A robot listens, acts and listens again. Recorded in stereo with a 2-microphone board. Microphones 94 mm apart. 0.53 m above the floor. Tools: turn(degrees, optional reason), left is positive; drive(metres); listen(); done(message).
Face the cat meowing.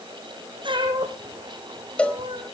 turn(degrees=-70, reason="The cat meowing: about 70° right or 110° right.")
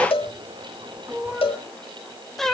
done("Facing the cat meowing, 1 to 2 m away.")